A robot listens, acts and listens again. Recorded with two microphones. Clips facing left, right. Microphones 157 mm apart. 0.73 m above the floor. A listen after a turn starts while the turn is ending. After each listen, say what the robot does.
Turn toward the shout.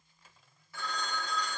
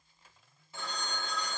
Keep listening.
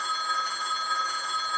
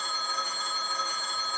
Keep listening.
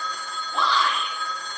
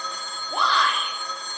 Turn 55° right.
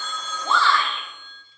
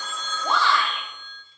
Turn 15° right.
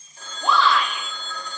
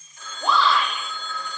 Facing the shout.